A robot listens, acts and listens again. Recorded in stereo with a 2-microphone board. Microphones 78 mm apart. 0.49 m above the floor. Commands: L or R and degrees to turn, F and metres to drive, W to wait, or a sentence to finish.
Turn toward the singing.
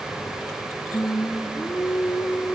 L20
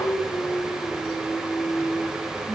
L20
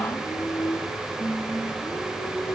L30
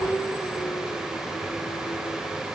L120
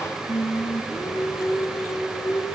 L40
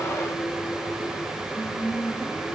L20
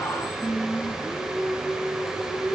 Found it: singing, straight ahead.